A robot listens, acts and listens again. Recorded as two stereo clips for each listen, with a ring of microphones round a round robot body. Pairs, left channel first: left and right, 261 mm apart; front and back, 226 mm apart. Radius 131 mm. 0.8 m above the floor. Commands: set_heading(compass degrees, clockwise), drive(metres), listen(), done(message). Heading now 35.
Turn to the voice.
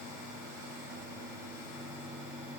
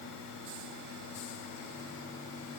listen()
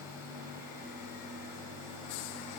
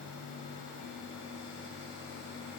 listen()
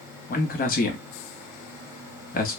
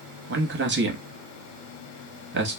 set_heading(250)
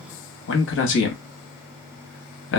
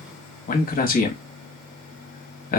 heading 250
set_heading(200)
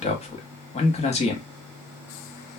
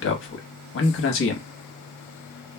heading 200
set_heading(175)
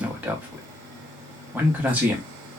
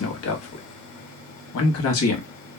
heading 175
done("Facing the man speaking.")